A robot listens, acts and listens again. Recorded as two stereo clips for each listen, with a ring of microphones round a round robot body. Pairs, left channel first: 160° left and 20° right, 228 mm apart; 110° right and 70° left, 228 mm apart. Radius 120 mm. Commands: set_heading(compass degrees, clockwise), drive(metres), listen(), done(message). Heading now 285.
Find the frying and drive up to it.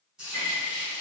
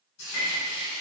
set_heading(35)
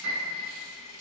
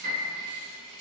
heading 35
set_heading(55)
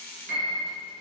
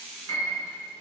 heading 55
listen()
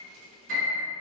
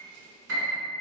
listen()
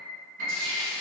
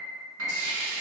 drive(1.0)
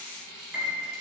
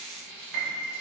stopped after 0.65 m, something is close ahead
set_heading(65)
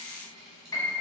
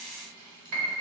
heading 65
done("Arrived at the frying, straight ahead.")